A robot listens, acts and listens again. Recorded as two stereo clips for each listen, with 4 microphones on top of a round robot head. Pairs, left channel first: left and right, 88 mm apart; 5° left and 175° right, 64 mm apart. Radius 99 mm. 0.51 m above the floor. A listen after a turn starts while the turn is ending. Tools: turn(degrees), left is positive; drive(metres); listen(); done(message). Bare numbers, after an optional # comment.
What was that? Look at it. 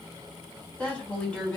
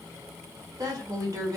# The woman speaking: 165° left.
turn(165)
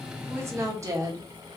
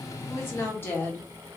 # The woman speaking is now 50° right.
turn(-50)
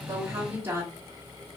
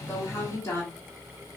# The woman speaking is now 40° right.
turn(-40)
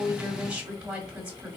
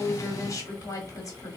# The woman speaking is now 10° right.
turn(-10)
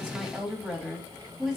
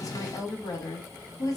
done("Found it: a woman speaking, straight ahead.")